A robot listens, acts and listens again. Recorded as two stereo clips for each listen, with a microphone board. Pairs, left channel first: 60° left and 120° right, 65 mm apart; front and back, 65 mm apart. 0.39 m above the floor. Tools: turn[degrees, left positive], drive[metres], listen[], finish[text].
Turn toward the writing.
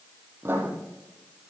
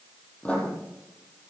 Thought: The writing: 70° right.
Action: turn[-70]
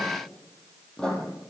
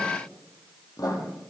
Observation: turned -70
Thought: The writing is now 20° right.
Action: turn[-20]
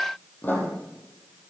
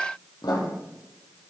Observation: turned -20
Action: finish[Found it: writing, straight ahead, 2 to 4 m away.]